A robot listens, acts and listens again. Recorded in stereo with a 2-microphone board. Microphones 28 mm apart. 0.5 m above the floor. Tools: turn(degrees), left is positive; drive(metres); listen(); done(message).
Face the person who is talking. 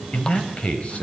turn(degrees=45)
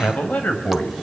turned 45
turn(degrees=85)
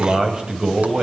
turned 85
turn(degrees=-30)
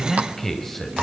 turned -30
turn(degrees=15)
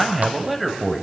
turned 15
done("Found it: a man speaking, straight ahead.")